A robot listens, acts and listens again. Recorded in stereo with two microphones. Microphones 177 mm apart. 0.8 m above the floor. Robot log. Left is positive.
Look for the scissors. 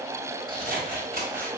note: The scissors: about 50° right or 130° right.
cmd yaw -50
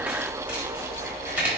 note: So it is at 10° right.
cmd yaw -10
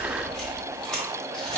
end: Found it: scissors, straight ahead.